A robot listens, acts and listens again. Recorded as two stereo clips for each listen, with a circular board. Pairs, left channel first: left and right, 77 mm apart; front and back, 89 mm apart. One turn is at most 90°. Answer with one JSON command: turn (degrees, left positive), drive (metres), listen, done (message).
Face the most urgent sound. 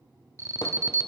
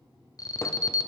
{"turn": -45}
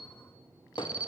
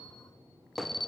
{"turn": -15}
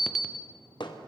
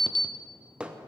{"done": "Facing the alarm."}